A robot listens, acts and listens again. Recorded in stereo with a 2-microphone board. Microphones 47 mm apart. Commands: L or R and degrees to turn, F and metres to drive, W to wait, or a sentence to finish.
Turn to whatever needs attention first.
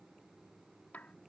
W
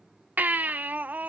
R40
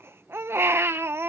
R95
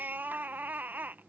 R50
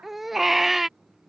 Facing the baby crying.